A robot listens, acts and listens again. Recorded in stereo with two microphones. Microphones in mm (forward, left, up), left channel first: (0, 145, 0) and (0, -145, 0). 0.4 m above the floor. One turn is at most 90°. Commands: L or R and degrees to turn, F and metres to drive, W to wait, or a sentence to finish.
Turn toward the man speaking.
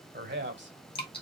R40
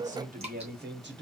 R40
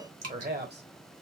R35
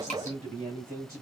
R30
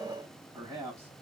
R10
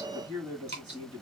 Found it: a man speaking, straight ahead, 2 to 4 m away.